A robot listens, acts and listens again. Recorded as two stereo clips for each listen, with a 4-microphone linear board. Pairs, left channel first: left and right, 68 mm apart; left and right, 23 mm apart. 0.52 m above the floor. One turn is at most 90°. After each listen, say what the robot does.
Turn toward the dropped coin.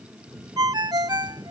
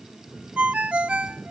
Keep listening.
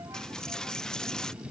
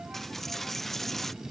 Turn 30° left.
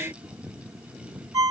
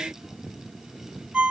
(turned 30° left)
Keep listening.
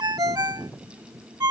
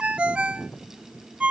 I heard a dropped coin, but can't make it out now. It was about 20° right or 140° left.